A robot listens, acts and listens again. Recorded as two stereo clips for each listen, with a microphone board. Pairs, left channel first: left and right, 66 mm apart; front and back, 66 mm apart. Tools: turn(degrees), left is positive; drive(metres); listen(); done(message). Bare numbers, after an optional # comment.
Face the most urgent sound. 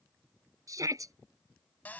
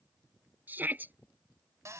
# The shout: 120° right.
turn(-120)
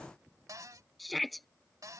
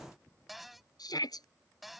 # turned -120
done("Facing the shout.")